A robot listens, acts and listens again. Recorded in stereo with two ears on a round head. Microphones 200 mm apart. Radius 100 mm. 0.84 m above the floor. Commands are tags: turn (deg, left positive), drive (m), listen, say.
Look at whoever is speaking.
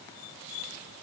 <listen/>
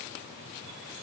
<listen/>
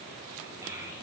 <turn deg="-15"/>
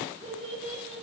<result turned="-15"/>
<turn deg="-150"/>
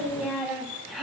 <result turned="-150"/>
<say>Facing the child speaking.</say>